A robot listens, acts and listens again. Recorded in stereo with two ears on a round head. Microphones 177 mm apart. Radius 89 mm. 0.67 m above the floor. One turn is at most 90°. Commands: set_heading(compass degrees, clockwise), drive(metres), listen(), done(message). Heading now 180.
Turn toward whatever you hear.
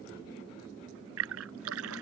set_heading(270)
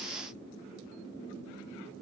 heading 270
done("Facing where the splash came from. I can't hear it now.")